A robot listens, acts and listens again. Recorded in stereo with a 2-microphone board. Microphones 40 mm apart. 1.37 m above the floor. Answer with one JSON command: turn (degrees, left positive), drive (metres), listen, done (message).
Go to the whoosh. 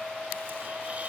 {"listen": true}
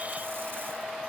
{"listen": true}
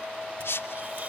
{"turn": 90}
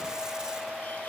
{"listen": true}
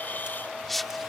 {"drive": 1.0}
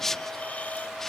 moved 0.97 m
{"turn": 10}
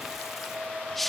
{"drive": 1.0}
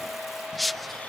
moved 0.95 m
{"drive": 1.0}
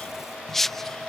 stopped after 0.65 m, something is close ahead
{"turn": 10}
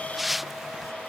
{"done": "I am next to the whoosh."}